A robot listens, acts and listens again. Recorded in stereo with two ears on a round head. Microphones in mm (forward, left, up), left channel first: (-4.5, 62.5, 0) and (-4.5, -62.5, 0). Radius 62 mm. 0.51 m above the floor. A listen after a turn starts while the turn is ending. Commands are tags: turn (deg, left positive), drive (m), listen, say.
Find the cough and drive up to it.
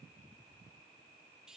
<listen/>
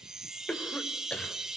<turn deg="30"/>
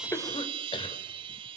<listen/>
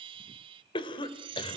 <turn deg="135"/>
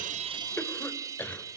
<turn deg="15"/>
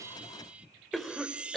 <drive m="1.0"/>
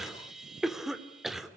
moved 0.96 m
<drive m="1.0"/>
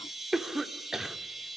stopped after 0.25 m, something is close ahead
<say>Arrived at the cough, straight ahead.</say>